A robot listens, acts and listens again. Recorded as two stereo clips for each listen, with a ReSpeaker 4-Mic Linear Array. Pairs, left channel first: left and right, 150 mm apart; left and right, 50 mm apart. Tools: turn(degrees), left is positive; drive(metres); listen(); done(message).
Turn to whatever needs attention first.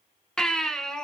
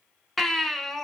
turn(degrees=30)
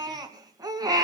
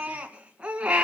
turn(degrees=-25)
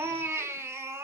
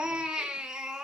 turn(degrees=-15)
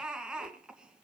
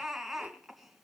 done("Found it: a baby crying, straight ahead.")